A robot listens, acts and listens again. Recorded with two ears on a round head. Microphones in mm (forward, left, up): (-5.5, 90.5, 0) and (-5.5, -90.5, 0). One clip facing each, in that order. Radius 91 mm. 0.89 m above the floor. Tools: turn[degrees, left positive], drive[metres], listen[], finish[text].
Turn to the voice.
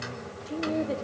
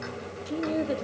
Thought: The woman speaking: about 20° right or 160° right.
Action: turn[-20]
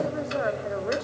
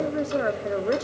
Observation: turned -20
Thought: So it is at 140° right.
Action: turn[-140]
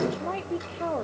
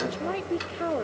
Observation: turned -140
Thought: The woman speaking is now 20° right.
Action: turn[-20]
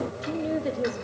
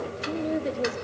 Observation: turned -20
Action: finish[Facing the woman speaking, 1 to 2 m away.]